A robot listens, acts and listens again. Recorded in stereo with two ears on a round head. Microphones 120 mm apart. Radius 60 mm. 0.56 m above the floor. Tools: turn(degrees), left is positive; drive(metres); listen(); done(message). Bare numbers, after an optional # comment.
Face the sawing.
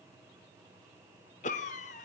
listen()
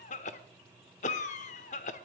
listen()
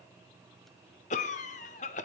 done("I can't make out sawing, only a cough.")